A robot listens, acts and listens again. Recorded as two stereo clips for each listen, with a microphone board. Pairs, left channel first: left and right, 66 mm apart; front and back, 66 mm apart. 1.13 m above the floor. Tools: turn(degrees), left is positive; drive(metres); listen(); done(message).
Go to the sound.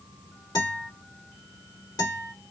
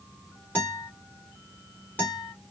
turn(degrees=70)
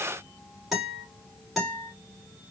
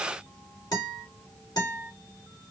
drive(metres=1.0)
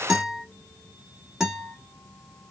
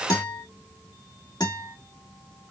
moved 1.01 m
turn(degrees=-10)
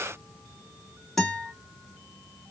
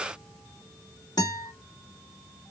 drive(metres=1.0)
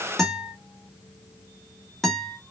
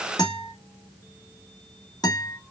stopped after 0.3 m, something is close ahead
done("Arrived at the guitar, straight ahead.")